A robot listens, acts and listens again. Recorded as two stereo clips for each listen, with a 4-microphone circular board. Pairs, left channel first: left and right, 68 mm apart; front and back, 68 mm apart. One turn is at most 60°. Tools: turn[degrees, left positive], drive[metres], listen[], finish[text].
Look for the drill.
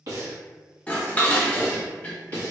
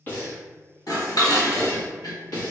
Action: listen[]
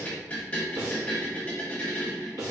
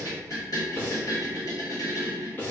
Action: listen[]
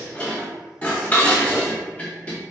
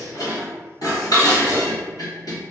Action: finish[I can't make out a drill to turn to.]